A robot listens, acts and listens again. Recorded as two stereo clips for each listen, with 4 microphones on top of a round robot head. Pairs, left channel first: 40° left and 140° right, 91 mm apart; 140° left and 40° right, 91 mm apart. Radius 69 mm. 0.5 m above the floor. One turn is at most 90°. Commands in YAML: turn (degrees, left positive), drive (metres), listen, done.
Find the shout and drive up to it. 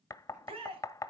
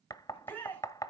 turn: -90
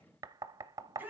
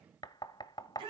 turn: -70
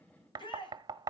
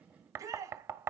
turn: 15
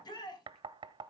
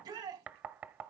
drive: 1.0
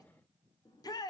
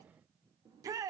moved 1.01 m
drive: 1.0
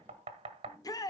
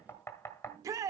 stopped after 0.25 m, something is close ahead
done: "Arrived at the shout, straight ahead."